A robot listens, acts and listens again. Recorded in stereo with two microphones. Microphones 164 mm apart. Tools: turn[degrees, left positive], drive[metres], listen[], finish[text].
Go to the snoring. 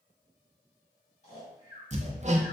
Thought: The snoring: about 45° left or 135° left.
Action: turn[45]
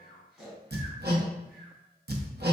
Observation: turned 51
Action: drive[1.0]
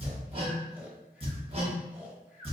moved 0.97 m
Thought: The snoring is now 10° right.
Action: turn[-10]
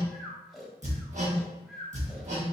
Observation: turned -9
Action: drive[1.0]
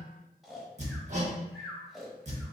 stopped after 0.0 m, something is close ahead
Action: finish[Arrived at the snoring, straight ahead.]